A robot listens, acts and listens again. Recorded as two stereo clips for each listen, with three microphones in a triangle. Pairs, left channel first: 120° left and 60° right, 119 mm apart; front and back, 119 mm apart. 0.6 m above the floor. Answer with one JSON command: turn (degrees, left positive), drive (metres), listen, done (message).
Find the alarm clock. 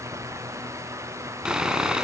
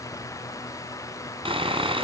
{"listen": true}
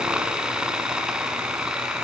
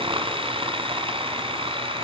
{"listen": true}
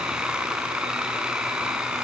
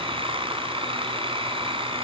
{"done": "I can't make out an alarm clock, only sawing."}